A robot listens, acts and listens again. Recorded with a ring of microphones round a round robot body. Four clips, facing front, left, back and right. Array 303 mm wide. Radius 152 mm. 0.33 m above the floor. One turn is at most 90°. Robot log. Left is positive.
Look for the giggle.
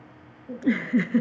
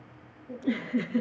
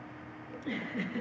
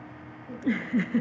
note: The giggle: 20° right.
cmd yaw -20
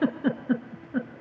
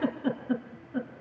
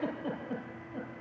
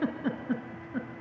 end: Facing the giggle.